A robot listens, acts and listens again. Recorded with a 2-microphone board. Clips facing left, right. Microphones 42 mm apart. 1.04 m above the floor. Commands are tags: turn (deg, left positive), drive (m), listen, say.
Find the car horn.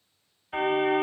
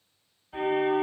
<turn deg="70"/>
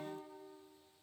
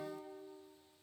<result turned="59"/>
<listen/>
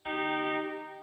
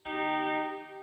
<turn deg="15"/>
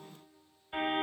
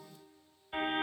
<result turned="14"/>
<say>Facing the car horn.</say>